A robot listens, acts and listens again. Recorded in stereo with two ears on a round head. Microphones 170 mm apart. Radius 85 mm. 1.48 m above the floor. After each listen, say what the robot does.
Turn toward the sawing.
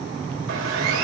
Turn 90° right.
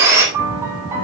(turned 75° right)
Turn 15° right.
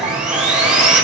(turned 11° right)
Found it: sawing, straight ahead.